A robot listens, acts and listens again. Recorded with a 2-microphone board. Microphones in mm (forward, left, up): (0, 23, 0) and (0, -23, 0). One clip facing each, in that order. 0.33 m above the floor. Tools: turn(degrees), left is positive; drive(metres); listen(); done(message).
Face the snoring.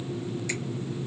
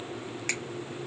listen()
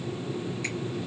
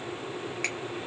listen()
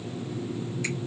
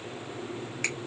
done("I can't make out snoring.")